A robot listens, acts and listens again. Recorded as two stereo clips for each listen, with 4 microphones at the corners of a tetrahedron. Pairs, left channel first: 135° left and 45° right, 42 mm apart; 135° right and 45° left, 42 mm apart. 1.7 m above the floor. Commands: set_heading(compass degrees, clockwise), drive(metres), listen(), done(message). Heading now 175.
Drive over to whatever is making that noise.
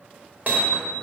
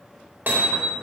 drive(1.0)
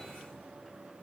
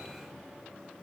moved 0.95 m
listen()
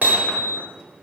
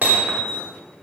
drive(1.0)
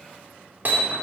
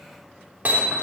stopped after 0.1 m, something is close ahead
done("Blocked. The hammering is further on, straight ahead.")